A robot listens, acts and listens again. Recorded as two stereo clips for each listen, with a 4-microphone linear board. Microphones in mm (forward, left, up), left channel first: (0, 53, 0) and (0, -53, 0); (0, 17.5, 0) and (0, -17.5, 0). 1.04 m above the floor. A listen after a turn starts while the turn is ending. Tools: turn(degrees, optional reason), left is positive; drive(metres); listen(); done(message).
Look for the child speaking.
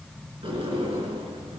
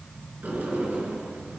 listen()
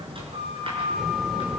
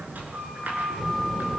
turn(degrees=-30)
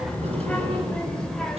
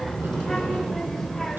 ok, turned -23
turn(degrees=30)
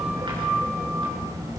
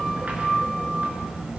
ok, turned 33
turn(degrees=-35, reason="So it is at 35° right.")
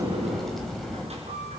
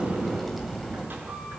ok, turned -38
done("Facing the child speaking.")